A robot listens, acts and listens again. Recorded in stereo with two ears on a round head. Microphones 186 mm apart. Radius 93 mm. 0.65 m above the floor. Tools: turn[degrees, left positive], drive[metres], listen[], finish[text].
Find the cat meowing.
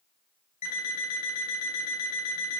Action: listen[]
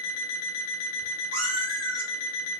Thought: The cat meowing: about 70° right or 110° right.
Action: turn[-70]
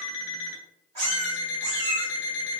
Thought: So it is at 25° right.
Action: turn[-25]
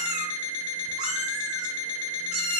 Action: finish[Facing the cat meowing, 2 to 4 m away.]